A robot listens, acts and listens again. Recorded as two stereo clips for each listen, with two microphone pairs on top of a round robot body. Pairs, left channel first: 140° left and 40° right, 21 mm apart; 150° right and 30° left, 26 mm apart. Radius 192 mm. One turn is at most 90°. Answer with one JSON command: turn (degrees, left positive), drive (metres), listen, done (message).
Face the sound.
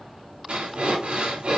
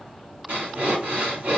{"done": "Facing the breathing."}